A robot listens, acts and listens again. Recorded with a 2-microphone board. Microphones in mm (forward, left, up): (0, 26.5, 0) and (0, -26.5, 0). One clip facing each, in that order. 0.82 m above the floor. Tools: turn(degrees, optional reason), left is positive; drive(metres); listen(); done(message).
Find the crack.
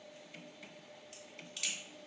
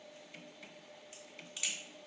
turn(degrees=-30)
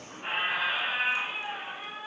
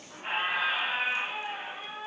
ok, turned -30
listen()
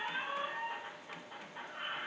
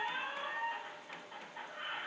done("I heard a crack, but can't make it out now. It was about 25° left or 145° right.")